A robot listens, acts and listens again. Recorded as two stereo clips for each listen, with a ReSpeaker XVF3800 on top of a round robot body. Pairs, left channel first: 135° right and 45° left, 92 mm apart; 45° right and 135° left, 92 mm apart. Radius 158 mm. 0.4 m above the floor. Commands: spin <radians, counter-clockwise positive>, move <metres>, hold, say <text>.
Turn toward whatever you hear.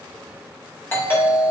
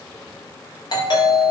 spin -1.22
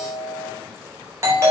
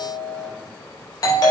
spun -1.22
spin -0.17
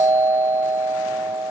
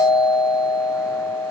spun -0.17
say Found it: a doorbell, straight ahead, 2 to 4 m away.